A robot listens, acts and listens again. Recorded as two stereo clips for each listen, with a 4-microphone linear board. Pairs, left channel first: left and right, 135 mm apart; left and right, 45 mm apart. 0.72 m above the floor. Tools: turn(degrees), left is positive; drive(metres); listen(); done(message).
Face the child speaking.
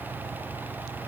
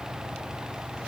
listen()
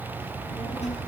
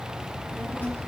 turn(degrees=50)
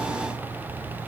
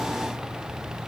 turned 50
done("Facing the child speaking.")